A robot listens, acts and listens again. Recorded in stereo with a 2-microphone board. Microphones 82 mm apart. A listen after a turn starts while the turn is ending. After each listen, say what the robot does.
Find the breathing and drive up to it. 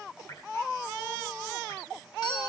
Keep listening.
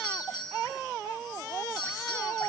Keep listening.
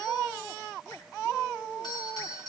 I can't make out breathing, only a doorbell.